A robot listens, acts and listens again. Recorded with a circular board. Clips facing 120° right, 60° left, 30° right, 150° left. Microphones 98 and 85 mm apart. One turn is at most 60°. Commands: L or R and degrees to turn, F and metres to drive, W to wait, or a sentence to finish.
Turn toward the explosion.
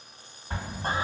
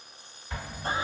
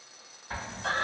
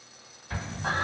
R60
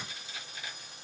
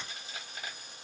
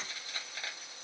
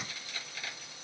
R30
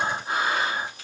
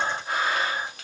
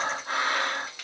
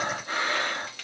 Facing where the explosion came from. I can't hear it now.